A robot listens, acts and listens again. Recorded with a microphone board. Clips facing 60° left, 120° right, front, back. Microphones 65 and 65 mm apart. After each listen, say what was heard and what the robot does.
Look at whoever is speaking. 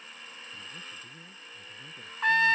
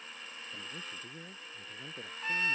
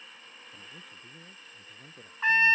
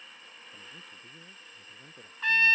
The man speaking: 90° right. Turn 90° right.
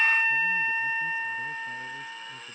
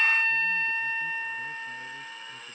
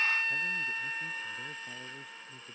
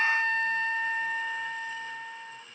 Keep listening.
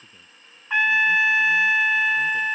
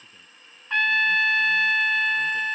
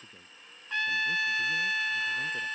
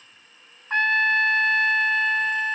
Keep listening.
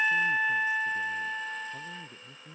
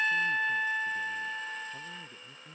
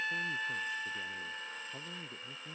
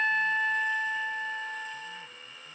The man speaking is now 20° right. Turn 20° right.
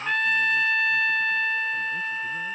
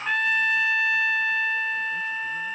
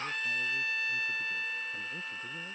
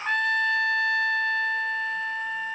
Keep listening.
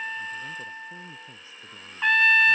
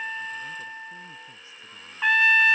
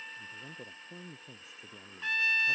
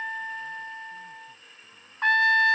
Keep listening.
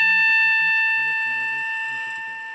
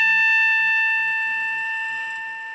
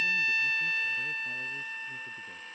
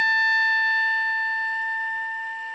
I heard a man speaking from this way, but can't make it out now.